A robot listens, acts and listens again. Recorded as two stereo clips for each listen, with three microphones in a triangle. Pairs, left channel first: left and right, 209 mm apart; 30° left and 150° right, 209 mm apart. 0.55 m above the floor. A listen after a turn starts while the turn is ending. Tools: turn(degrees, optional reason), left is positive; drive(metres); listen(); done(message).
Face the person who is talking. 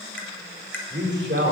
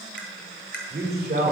turn(degrees=-115, reason="The man speaking: 115° right.")
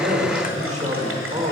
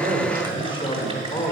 turn(degrees=-35, reason="The man speaking is now 35° right.")
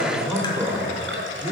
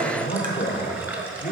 turn(degrees=-15, reason="The man speaking is now 15° right.")
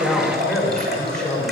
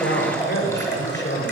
done("Found it: a man speaking, straight ahead.")